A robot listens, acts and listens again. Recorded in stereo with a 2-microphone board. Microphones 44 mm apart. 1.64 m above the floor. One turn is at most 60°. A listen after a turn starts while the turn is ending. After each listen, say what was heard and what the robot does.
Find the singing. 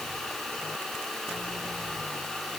Keep listening.
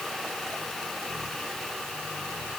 Keep listening.
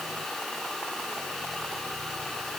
I can't make out singing to turn to.